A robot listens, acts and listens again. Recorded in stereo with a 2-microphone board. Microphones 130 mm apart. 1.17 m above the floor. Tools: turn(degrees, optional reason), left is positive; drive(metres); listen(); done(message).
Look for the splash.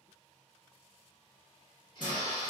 turn(degrees=75, reason="The splash: about 75° left or 105° left.")
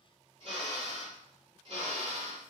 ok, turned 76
listen()
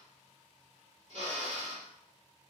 done("I heard a splash, but can't make it out now. It was about straight ahead or 30° left.")